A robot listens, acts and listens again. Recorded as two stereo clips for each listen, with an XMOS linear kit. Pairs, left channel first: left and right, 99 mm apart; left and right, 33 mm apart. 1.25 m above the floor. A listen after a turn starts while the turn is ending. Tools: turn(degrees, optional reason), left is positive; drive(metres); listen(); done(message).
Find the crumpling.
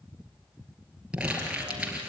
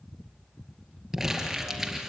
turn(degrees=-30)
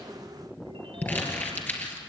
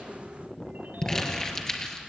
turn(degrees=20, reason="So it is at 20° left.")
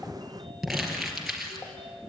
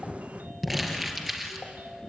done("Facing the crumpling.")